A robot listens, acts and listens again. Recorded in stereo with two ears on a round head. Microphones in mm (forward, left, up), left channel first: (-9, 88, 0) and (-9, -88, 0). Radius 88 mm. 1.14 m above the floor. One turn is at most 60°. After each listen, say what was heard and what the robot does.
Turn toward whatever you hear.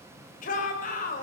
The shout: about 40° left or 140° left. Turn 40° left.
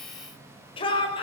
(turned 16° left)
So it is at 25° left. Turn 25° left.
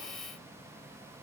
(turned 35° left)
Nothing new. It was at 10° right. Turn 10° right.
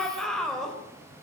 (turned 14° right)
Facing the shout.